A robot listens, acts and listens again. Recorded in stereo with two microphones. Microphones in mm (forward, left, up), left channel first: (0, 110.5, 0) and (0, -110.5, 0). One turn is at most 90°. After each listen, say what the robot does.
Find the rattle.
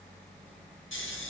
Keep listening.
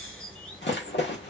Turn 60° left.
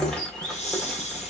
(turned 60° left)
Keep listening.
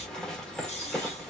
Facing the rattle, 1 to 2 m away.